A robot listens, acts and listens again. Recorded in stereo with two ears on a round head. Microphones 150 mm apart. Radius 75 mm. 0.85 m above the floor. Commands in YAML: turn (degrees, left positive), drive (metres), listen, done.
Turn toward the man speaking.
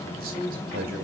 turn: -55
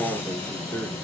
turn: 10
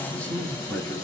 turn: 15
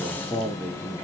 turn: 10
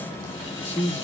turn: 15
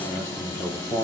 turn: 10
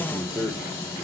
done: "Found it: a man speaking, straight ahead, 1 to 2 m away."